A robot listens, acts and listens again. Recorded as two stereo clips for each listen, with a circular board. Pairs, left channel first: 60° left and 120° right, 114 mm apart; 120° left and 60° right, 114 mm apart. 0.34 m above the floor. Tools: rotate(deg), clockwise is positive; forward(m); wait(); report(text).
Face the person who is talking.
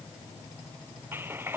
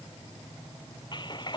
wait()
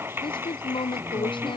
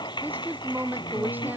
rotate(-15)
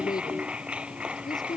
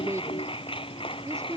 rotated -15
report("Found it: a woman speaking, straight ahead.")